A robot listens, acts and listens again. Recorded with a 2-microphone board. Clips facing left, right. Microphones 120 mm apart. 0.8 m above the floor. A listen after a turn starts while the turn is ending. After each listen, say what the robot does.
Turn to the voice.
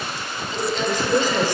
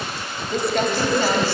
Turn 15° left.
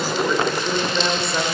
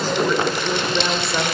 Found it: a woman speaking, straight ahead.